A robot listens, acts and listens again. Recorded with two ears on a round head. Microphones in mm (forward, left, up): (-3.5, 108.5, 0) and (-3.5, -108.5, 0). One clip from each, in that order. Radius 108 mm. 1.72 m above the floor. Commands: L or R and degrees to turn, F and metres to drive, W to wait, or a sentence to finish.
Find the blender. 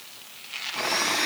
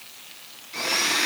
R30
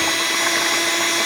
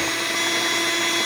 L20
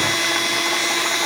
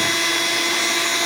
Facing the blender.